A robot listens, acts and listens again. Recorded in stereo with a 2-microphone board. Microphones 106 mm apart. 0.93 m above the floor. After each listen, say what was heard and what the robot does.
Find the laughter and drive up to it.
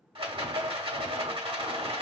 Keep listening.
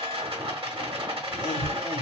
The laughter: about 50° left or 130° left. Turn 50° left.
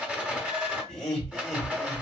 Drive 1.0 m forward.
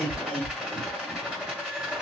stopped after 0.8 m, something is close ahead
The laughter is now 10° left. Turn 10° left.
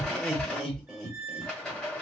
Arrived at the laughter, straight ahead.